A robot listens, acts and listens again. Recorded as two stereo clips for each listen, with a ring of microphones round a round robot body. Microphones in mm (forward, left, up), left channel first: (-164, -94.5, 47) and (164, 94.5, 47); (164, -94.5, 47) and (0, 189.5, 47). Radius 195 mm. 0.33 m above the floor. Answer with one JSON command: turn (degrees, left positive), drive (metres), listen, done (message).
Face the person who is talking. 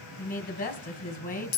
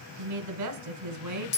{"turn": 145}
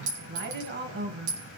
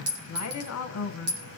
{"turn": -30}
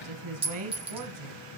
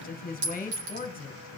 {"done": "Found it: a woman speaking, straight ahead."}